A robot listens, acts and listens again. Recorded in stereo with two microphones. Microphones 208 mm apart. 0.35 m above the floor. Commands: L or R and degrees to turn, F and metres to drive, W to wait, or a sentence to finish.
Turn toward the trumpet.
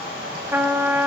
R30
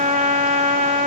R140
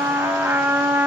R10
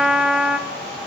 Facing the trumpet, under 1 m away.